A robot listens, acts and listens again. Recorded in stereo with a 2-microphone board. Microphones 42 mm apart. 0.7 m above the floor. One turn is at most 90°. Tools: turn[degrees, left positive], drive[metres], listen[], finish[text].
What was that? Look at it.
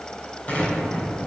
Thought: The explosion: about 35° left or 145° left.
Action: turn[35]
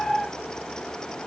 Action: listen[]
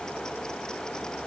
Action: finish[I heard an explosion, but can't make it out now. It was about straight ahead or 110° left.]